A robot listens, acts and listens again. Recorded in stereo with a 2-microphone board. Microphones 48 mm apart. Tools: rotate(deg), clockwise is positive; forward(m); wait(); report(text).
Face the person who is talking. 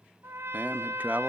rotate(35)
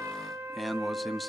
report("Found it: a man speaking, straight ahead, under 1 m away.")